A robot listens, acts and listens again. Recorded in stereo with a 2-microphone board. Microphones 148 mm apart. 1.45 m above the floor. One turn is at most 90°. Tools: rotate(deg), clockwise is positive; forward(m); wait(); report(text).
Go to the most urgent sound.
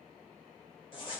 wait()
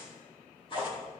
wait()
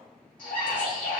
rotate(-65)
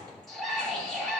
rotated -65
forward(1.0)
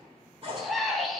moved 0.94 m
forward(1.0)
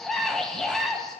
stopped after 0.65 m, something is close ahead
report("I am next to the scream.")